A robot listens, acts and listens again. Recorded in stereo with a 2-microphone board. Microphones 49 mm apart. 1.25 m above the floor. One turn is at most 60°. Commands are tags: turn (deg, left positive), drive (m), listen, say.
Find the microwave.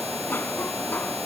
<listen/>
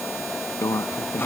<turn deg="60"/>
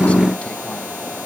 <turn deg="30"/>
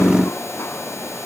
<listen/>
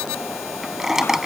<turn deg="-10"/>
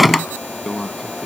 <say>Facing the microwave.</say>